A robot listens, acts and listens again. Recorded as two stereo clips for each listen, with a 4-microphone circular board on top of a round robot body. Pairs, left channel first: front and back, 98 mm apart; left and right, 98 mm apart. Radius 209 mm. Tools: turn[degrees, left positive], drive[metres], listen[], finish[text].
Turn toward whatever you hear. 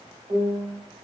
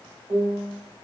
Thought: The piano: 135° right.
Action: turn[-135]
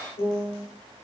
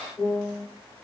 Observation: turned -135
Action: finish[Found it: a piano, straight ahead, under 1 m away.]